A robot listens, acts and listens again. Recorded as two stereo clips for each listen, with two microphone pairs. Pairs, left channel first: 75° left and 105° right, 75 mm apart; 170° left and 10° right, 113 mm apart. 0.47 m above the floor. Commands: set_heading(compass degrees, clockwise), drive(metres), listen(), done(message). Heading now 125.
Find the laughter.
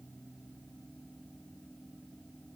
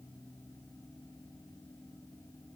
listen()
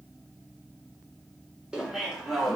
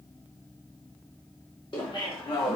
set_heading(325)
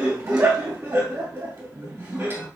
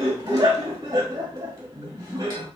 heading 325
set_heading(15)
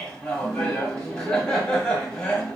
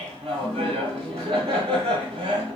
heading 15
set_heading(5)
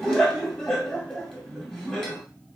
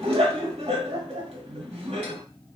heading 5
done("Found it: laughter, straight ahead.")